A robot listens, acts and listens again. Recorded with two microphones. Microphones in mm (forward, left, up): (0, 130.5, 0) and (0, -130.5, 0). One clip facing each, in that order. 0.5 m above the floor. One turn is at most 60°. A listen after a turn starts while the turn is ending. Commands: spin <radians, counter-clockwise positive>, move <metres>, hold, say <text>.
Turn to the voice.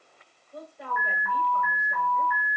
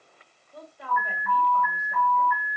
spin 1.05
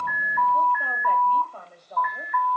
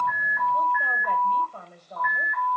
say Facing the woman speaking, 2 to 4 m away.